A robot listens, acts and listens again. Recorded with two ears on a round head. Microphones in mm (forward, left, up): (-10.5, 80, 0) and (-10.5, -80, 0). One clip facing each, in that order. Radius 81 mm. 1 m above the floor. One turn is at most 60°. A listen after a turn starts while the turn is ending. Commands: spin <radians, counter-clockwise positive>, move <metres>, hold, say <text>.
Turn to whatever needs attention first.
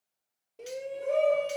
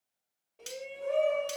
spin 0.96
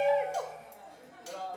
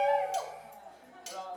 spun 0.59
spin 1.05
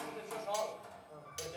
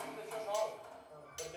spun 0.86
spin 0.70
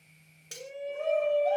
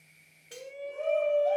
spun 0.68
say Facing the shout, 2 to 4 m away.